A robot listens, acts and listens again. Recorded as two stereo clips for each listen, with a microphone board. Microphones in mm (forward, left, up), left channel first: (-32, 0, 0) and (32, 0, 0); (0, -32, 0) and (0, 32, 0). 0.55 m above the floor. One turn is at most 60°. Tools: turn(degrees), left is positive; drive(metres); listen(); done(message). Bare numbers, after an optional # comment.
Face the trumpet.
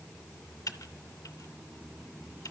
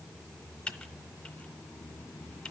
listen()
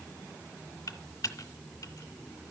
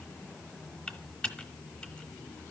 listen()
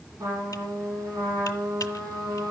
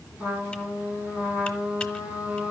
# The trumpet: 20° left.
turn(20)
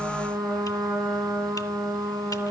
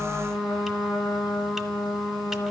done("Facing the trumpet.")